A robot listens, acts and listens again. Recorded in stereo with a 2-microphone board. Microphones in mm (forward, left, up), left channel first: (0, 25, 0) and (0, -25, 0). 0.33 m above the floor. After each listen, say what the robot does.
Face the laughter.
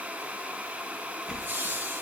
Turn 50° right.
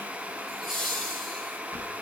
Found it: laughter, straight ahead.